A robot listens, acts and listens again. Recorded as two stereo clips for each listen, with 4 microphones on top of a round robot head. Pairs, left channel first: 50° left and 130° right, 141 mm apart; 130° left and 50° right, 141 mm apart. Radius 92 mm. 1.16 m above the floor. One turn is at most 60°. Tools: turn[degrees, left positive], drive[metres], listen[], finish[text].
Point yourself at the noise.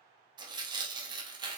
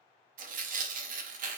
Thought: The tearing paper: 70° right.
Action: turn[-60]
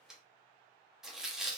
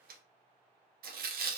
Thought: The tearing paper is now 45° right.
Action: turn[-45]
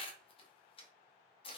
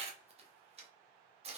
Action: finish[Facing the tearing paper, under 1 m away.]